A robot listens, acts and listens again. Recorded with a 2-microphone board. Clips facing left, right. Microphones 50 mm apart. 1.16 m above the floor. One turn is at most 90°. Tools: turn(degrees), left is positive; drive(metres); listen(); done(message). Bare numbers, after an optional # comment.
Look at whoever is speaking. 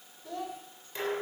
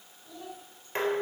turn(90)
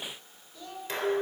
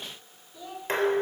# So it is at 10° right.
turn(-10)
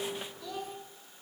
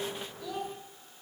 done("Facing the child speaking, 2 to 4 m away.")